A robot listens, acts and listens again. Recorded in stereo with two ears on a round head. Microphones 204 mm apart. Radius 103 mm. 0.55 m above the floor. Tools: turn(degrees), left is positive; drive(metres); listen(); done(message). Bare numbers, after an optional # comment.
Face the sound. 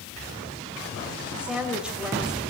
turn(-30)
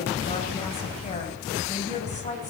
# So it is at 30° left.
turn(30)
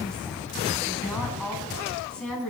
done("Found it: a woman speaking, straight ahead, over 4 m away.")